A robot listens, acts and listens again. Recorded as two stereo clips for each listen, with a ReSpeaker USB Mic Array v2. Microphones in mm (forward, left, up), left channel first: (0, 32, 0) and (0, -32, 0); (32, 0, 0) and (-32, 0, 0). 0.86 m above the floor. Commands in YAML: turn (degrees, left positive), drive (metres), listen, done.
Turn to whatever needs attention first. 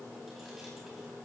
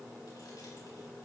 listen: true
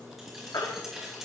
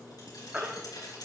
turn: 110
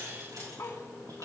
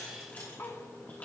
listen: true
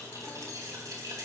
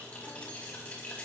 listen: true
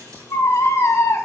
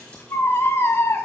turn: 45
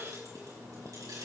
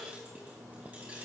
listen: true
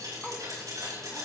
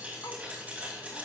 listen: true
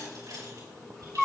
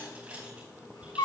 done: "Facing the baby crying."